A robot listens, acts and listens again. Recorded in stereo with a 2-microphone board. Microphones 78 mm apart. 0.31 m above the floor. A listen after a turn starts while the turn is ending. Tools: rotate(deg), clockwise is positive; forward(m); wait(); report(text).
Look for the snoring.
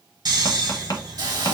rotate(60)
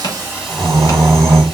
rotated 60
rotate(35)
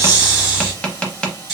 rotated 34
report("Facing the snoring.")